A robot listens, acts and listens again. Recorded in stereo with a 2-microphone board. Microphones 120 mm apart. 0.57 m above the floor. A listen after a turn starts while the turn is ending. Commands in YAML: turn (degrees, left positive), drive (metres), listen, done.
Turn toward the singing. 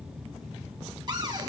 listen: true
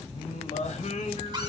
turn: 90
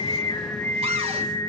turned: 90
turn: 30
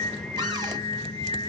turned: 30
turn: 40
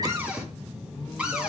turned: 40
turn: 25
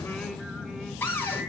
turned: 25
listen: true
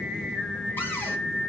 done: "Found it: singing, straight ahead, 1 to 2 m away."